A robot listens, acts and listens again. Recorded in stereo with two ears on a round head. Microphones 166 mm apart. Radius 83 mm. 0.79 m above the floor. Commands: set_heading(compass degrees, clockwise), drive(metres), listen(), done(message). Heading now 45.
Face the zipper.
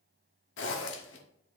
set_heading(335)
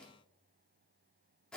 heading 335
done("Facing the zipper.")